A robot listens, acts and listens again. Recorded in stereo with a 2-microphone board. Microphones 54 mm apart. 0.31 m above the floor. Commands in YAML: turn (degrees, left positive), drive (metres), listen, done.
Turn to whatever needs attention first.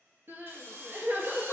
turn: -45
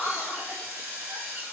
turn: -90
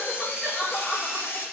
done: "Found it: crying, straight ahead, under 1 m away."